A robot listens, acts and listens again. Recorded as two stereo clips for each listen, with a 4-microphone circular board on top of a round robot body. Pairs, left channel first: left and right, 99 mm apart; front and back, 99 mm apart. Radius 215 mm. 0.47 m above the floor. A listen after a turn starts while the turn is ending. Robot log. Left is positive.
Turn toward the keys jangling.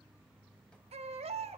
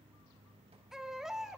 cmd idle
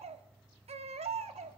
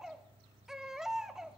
cmd idle
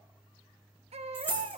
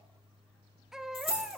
note: The keys jangling: 20° left.
cmd yaw +20
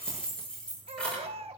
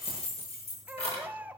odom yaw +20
note: The keys jangling is now 10° left.
cmd yaw +10
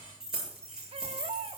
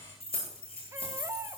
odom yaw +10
end: Found it: keys jangling, straight ahead, over 4 m away.